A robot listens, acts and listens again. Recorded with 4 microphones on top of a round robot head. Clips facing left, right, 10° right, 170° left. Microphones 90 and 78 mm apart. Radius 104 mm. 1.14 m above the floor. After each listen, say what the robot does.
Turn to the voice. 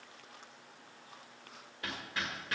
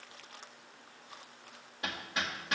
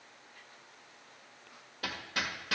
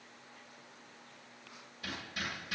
Keep listening.
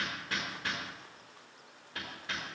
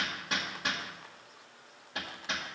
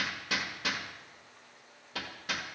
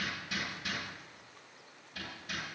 Keep listening.
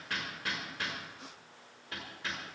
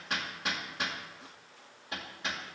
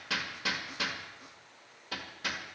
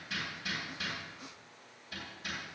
I can't make out anyone speaking to turn to.